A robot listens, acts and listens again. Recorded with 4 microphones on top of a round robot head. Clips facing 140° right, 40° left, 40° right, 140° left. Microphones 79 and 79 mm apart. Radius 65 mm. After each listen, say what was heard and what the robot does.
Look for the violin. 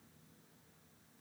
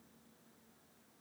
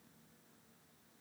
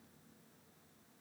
Keep listening.
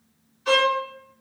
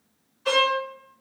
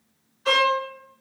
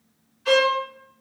The violin: 20° left. Turn 20° left.
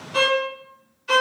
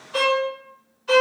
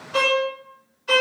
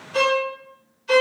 Facing the violin, 1 to 2 m away.